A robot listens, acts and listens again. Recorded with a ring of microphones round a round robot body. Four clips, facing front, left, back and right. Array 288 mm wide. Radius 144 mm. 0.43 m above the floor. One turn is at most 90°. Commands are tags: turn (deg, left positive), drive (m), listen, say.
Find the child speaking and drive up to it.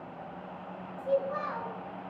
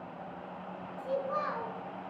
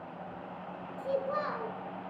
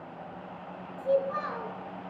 <turn deg="-90"/>
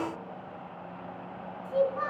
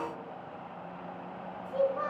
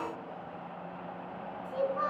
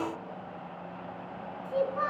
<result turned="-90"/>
<turn deg="-85"/>
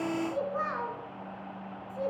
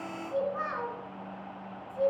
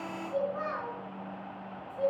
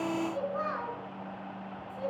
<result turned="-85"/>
<turn deg="15"/>
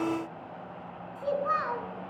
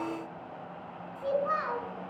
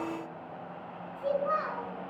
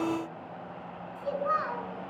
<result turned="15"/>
<drive m="1.0"/>
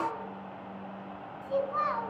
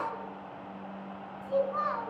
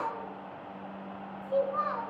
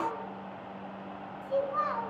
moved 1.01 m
<drive m="1.0"/>
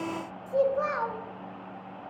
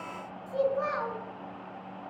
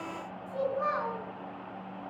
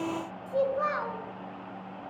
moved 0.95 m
<turn deg="-15"/>
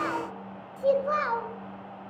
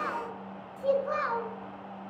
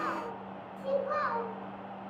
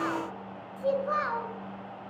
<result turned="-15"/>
<drive m="1.0"/>
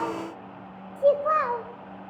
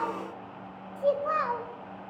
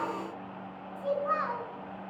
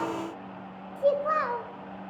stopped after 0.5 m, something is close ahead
<turn deg="-10"/>
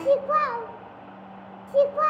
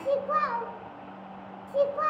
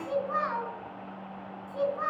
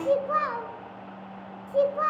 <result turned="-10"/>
<say>Arrived at the child speaking, straight ahead.</say>